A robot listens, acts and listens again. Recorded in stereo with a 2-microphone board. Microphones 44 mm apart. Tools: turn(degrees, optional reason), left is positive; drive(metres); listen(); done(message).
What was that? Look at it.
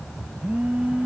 turn(degrees=-35, reason="The phone buzzing: about 35° right or 145° right.")
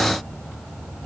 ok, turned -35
listen()
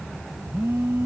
turn(degrees=-115, reason="So it is at 115° right.")
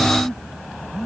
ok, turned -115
done("Found it: a phone buzzing, straight ahead.")